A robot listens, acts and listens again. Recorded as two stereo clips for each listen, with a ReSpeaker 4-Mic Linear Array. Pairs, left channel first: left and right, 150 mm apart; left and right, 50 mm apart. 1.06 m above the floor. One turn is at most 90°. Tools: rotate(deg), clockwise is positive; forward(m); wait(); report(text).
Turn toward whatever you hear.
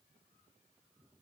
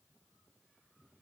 wait()
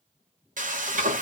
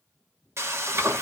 rotate(60)
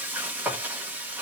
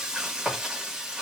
rotate(15)
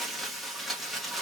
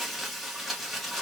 report("Facing the frying.")